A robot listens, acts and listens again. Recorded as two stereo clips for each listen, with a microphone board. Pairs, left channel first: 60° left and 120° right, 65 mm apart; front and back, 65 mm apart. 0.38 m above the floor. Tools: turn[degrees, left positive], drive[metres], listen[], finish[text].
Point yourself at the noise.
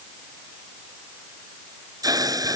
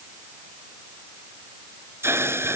Thought: The hiss: 130° right.
Action: turn[-130]
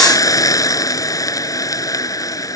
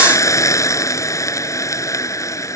Thought: The hiss is now 35° left.
Action: turn[35]
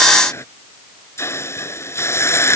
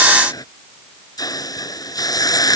Thought: The hiss is now 15° left.
Action: turn[15]
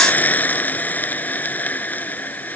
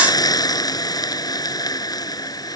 Action: finish[Found it: a hiss, straight ahead.]